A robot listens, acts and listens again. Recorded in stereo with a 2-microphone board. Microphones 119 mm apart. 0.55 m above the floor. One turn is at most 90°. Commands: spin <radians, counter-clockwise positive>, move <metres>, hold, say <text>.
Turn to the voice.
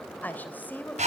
spin 0.52
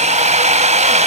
hold
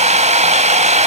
hold
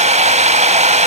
say I heard a woman speaking, but can't make it out now. It was about 15° right or 135° left.